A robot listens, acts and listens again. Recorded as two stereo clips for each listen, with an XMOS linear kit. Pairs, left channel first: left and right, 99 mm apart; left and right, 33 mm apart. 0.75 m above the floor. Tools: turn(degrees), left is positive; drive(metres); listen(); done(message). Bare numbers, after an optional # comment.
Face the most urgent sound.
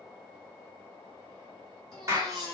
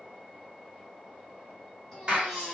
turn(30)
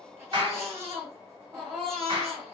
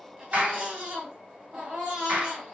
# So it is at 25° right.
turn(-25)
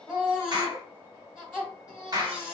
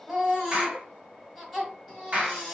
done("Found it: a baby crying, straight ahead, 2 to 4 m away.")